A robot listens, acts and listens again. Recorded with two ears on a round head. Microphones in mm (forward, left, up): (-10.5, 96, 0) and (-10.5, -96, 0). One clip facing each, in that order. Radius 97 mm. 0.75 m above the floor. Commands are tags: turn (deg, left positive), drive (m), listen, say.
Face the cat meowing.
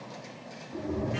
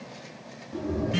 <turn deg="-20"/>
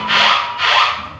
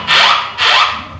<turn deg="-135"/>
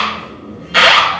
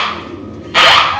<turn deg="-55"/>
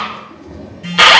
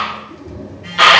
<turn deg="-10"/>
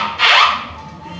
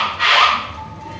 <say>Facing the cat meowing, 2 to 4 m away.</say>